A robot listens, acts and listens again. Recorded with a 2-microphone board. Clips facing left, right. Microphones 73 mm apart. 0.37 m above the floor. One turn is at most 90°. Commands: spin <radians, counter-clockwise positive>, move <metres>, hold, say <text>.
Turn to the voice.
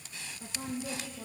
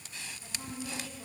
spin 1.57
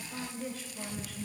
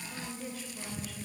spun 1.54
say Found it: a woman speaking, straight ahead, over 4 m away.